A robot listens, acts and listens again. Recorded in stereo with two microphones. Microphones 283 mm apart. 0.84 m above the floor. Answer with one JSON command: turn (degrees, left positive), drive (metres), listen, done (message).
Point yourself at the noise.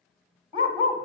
{"turn": -20}
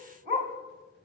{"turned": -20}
{"turn": -140}
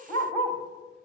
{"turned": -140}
{"done": "Facing the dog barking, 1 to 2 m away."}